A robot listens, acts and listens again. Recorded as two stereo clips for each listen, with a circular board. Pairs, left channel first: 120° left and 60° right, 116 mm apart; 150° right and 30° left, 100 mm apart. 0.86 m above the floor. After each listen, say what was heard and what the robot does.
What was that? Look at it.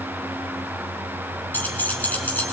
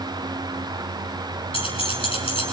The keys jangling: 165° right. Turn 165° right.
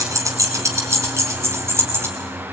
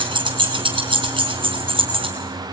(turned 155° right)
The keys jangling is now 10° left. Turn 10° left.
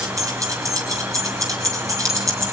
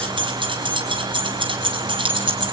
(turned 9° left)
Found it: keys jangling, straight ahead, over 4 m away.